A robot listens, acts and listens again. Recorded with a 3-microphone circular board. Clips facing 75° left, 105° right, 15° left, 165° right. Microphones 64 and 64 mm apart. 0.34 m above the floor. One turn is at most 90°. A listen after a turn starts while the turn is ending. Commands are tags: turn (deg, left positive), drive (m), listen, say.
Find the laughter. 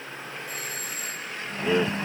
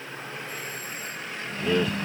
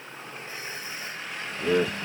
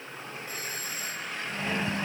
<say>Facing the laughter.</say>